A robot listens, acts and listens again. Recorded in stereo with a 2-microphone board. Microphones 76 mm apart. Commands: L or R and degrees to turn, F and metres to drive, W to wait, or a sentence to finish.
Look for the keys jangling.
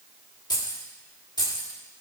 L90
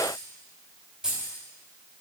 R10
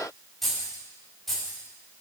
Facing the keys jangling, over 4 m away.